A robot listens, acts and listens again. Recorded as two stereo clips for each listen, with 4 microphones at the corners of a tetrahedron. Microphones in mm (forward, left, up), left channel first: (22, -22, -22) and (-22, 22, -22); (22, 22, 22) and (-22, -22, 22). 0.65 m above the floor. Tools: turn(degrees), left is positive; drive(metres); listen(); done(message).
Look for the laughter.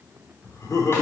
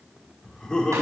turn(degrees=-25)
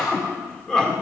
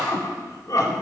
turn(degrees=35)
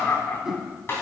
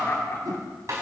done("Found it: laughter, straight ahead.")